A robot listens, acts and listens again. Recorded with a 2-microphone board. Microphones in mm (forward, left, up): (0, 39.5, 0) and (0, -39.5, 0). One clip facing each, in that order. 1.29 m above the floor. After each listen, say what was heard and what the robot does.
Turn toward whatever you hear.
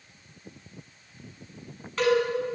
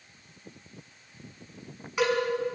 Turn 30° right.
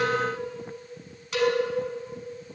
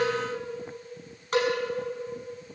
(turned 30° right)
So it is at 135° right. Turn 135° right.
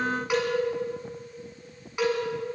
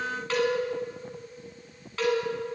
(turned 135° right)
The cowbell is now 15° left. Turn 15° left.
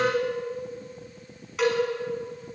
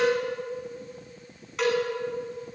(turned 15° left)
Facing the cowbell, over 4 m away.